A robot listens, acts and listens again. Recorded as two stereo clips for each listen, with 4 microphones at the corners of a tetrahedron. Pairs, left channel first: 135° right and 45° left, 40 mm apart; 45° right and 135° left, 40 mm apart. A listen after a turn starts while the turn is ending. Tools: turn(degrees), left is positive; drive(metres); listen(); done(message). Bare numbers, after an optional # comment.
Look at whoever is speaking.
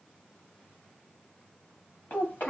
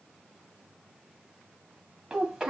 # The child speaking: 150° right.
turn(-150)
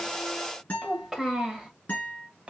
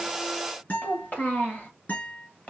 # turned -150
done("Facing the child speaking, 1 to 2 m away.")